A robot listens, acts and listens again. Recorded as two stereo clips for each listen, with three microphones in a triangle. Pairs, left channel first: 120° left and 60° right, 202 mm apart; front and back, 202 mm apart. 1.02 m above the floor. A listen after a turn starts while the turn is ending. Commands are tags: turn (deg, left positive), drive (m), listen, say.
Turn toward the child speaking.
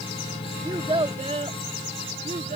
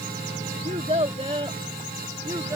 <turn deg="-105"/>
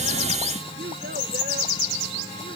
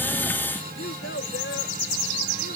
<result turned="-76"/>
<turn deg="-30"/>
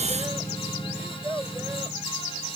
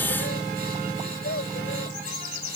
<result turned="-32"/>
<turn deg="15"/>
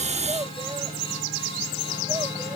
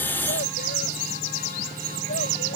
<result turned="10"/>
<listen/>
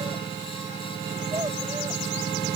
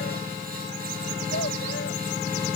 <listen/>
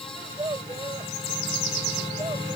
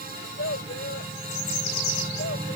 <say>Found it: a child speaking, straight ahead.</say>